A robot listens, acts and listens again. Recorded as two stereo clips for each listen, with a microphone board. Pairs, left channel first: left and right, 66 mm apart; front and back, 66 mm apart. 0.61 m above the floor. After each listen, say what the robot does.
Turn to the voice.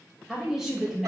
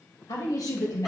Facing the woman speaking, 2 to 4 m away.